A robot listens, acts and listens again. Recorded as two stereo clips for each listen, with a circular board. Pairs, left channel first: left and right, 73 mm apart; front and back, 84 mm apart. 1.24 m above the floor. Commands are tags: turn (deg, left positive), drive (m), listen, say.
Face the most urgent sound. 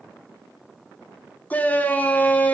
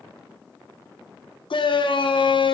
<turn deg="20"/>
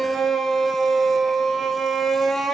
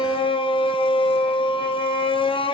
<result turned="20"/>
<say>Found it: a shout, straight ahead.</say>